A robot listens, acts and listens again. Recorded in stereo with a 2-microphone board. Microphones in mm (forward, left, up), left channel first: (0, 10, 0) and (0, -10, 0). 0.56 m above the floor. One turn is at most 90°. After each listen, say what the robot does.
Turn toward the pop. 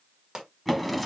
Turn 30° right.
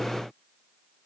Keep listening.
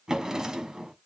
I heard a pop, but can't make it out now. It was about straight ahead or 120° right.